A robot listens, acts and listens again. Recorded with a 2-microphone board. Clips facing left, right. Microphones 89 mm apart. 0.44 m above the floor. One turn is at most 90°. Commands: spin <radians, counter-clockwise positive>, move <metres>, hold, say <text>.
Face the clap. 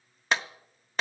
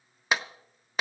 spin -0.52
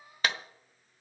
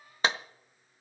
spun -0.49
spin -1.57
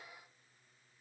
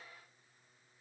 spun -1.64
spin -0.87
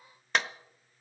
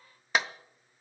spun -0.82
say Found it: a clap, straight ahead.